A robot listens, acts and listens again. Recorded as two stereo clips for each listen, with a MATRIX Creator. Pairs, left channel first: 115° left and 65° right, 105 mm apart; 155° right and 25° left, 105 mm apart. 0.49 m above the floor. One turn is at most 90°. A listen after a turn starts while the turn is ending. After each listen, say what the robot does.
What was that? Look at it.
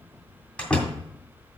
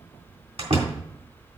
Turn 35° left.
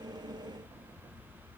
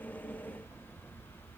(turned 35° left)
I heard a door slam from this way, but can't make it out now.